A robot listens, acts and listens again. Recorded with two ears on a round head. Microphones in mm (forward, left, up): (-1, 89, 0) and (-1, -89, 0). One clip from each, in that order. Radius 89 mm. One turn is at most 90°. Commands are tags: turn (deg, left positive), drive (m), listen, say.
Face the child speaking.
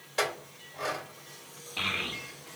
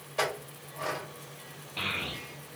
<turn deg="20"/>
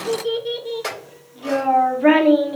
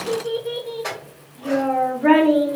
<turn deg="90"/>
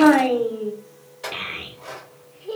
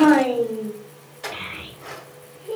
<turn deg="35"/>
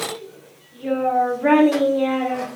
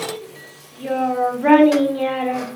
<turn deg="-10"/>
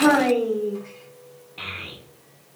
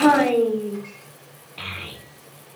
<say>Facing the child speaking, under 1 m away.</say>